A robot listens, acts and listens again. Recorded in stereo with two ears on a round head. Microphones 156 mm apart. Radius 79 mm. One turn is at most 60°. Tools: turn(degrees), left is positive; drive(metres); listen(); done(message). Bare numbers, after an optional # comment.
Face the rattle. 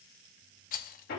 # The rattle: about 50° left or 130° left.
turn(50)
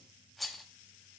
done("Found it: a rattle, straight ahead, under 1 m away.")